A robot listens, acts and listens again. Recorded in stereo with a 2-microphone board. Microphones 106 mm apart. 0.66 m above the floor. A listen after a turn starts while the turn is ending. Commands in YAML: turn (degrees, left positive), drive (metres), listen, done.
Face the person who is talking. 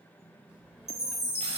turn: -30
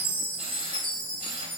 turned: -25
listen: true
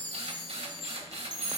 listen: true
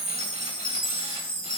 done: "I heard a child speaking, but can't make it out now. It was about 15° left or 145° right."